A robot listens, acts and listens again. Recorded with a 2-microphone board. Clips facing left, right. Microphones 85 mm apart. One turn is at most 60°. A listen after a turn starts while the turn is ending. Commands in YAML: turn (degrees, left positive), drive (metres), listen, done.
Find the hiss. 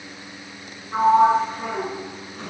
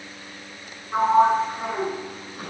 listen: true
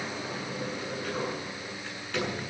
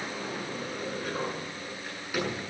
listen: true
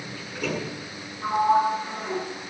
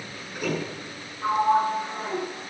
done: "I can't make out a hiss to turn to."